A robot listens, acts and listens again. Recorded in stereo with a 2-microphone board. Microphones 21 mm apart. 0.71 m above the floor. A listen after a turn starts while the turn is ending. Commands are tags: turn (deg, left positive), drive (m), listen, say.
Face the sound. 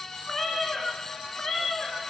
<turn deg="25"/>
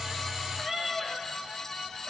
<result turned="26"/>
<say>Found it: a cat meowing, straight ahead, 2 to 4 m away.</say>